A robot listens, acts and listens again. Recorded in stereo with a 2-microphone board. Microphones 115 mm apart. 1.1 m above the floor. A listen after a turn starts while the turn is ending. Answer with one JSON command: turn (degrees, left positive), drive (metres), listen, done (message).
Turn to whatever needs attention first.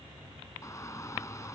{"turn": 25}
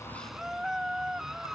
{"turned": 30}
{"done": "Facing the shout."}